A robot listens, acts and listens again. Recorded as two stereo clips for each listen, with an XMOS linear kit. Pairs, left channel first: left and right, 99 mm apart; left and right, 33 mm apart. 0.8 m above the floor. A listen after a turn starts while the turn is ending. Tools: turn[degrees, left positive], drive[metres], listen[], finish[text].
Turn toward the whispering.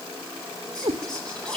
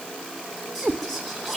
Action: turn[30]
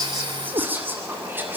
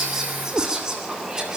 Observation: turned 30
Thought: So it is at 20° right.
Action: turn[-20]
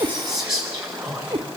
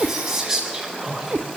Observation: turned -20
Action: finish[Found it: whispering, straight ahead.]